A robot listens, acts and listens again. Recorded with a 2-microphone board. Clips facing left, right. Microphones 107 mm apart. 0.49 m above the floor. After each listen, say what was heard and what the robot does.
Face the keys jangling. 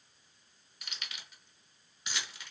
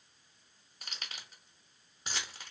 The keys jangling: about 40° right or 140° right. Turn 40° right.
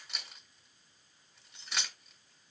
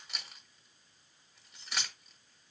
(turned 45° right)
Facing the keys jangling.